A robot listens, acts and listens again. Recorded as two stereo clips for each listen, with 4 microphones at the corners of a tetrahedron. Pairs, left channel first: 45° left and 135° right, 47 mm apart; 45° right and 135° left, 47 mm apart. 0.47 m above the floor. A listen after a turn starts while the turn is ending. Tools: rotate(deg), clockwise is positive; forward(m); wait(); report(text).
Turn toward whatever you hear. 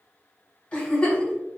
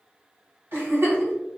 rotate(-110)
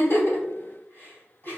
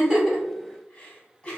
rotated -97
rotate(-15)
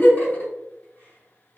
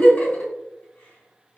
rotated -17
report("Found it: a giggle, straight ahead, 2 to 4 m away.")